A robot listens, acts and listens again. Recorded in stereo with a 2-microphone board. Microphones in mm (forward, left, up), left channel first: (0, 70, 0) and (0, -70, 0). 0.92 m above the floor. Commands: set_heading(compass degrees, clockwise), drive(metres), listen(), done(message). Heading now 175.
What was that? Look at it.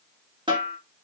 set_heading(210)
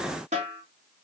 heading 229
set_heading(309)
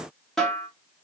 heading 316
done("Facing the snare drum.")